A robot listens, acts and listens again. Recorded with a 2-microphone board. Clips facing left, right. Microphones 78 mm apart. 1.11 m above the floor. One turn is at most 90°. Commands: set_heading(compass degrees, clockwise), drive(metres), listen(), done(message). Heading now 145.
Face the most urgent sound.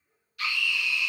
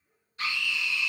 set_heading(175)
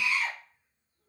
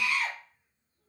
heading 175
set_heading(265)
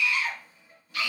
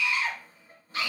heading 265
set_heading(300)
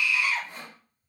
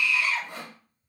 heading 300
set_heading(290)
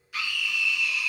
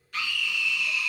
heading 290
done("Facing the scream, under 1 m away.")